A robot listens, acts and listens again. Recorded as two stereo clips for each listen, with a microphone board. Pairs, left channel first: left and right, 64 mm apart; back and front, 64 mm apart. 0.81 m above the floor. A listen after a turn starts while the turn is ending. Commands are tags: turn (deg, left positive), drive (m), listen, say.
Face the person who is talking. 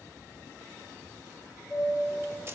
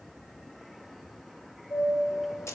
<listen/>
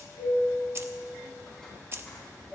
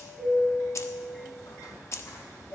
<listen/>
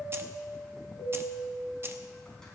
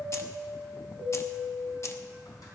<say>I can't make out anyone speaking, only keys jangling and a chime.</say>